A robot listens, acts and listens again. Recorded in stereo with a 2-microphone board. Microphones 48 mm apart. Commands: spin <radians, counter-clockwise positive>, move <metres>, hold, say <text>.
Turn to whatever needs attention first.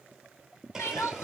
spin 1.05
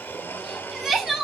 say Found it: crying, straight ahead, 1 to 2 m away.